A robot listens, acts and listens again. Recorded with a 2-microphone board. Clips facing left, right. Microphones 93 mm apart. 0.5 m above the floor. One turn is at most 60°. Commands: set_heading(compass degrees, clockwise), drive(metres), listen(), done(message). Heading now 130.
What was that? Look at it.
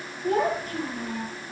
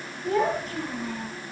set_heading(90)
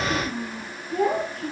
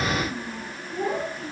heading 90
set_heading(30)
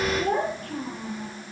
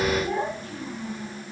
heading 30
set_heading(330)
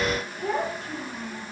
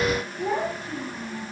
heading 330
set_heading(340)
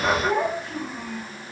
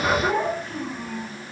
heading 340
done("Facing the child speaking, over 4 m away.")